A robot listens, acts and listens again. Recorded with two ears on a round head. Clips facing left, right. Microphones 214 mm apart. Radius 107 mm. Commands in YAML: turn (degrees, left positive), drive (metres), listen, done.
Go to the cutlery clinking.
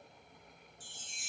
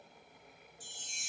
listen: true
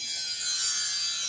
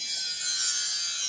listen: true
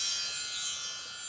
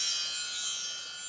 done: "I can't make out cutlery clinking to turn to."